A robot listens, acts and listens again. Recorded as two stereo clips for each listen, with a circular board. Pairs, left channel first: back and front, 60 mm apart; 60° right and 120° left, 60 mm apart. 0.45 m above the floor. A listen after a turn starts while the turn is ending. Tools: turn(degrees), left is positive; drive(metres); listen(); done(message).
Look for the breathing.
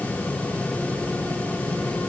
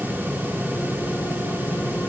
listen()
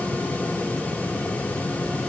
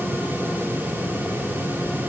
listen()
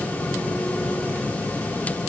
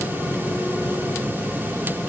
done("I can't make out breathing to turn to.")